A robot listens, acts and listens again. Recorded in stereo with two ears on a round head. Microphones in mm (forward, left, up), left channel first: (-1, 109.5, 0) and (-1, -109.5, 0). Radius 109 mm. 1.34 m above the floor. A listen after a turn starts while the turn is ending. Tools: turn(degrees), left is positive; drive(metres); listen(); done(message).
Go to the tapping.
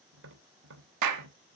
turn(degrees=-50)
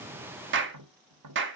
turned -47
turn(degrees=-80)
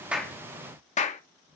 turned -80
listen()
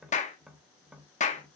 drive(metres=1.0)
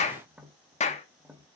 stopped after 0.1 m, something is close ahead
done("Something is in my way. I am facing the tapping but have not reached it.")